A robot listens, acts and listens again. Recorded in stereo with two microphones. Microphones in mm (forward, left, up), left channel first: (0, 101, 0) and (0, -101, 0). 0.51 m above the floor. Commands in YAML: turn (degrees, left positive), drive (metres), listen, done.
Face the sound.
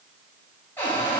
turn: 30
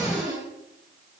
turn: -15
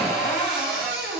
done: "Found it: a cupboard door, straight ahead, 1 to 2 m away."